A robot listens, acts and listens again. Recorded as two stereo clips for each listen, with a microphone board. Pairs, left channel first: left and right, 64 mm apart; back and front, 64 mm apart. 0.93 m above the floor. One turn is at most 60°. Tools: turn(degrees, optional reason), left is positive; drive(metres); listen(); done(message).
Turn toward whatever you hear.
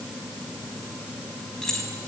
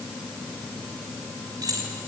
turn(degrees=10, reason="The keys jangling: 10° left.")
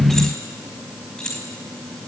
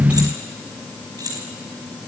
turn(degrees=10, reason="The keys jangling is now 10° left.")
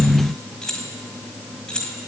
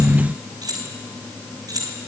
turn(degrees=15, reason="The keys jangling is now 15° left.")
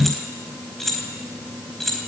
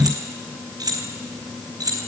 done("Found it: keys jangling, straight ahead.")